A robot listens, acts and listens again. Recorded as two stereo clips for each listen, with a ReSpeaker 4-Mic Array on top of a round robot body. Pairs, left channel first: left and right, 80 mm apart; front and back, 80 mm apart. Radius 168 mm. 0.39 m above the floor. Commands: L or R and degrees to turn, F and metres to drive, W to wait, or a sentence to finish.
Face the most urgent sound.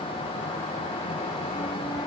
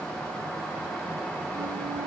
W
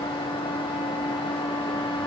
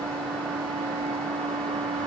W
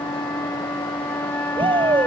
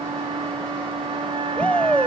R75
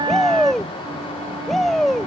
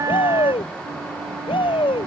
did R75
Facing the shout.